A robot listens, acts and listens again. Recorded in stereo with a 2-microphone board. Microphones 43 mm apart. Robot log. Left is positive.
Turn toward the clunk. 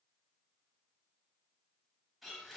cmd idle
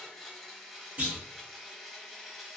note: The clunk: about 45° right or 135° right.
cmd yaw -45
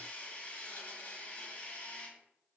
cmd idle
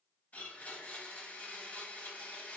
end: I heard a clunk, but can't make it out now. It was about straight ahead or 90° right.